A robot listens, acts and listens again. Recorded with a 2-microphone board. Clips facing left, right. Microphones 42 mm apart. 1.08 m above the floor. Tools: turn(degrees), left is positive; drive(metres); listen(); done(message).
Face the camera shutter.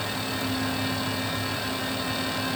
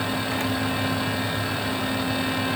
listen()
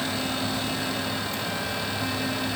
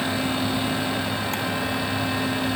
listen()
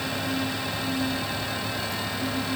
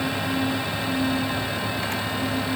done("I can't make out a camera shutter to turn to.")